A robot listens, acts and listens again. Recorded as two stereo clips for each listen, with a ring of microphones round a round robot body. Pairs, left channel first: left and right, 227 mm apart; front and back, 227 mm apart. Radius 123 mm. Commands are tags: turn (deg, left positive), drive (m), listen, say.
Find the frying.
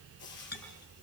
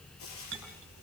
<turn deg="40"/>
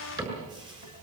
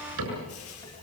<turn deg="-15"/>
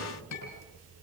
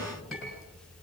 <listen/>
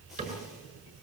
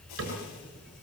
<listen/>
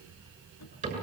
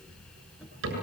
<say>Facing where the frying came from. I can't hear it now.</say>